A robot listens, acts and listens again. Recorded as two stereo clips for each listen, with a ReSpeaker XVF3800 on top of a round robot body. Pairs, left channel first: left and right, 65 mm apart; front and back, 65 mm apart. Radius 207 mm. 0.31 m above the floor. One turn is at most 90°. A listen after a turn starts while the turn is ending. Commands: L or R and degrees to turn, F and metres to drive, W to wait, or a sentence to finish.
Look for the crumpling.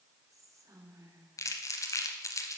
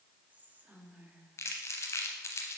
L50
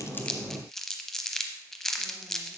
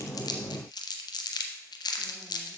Found it: crumpling, straight ahead.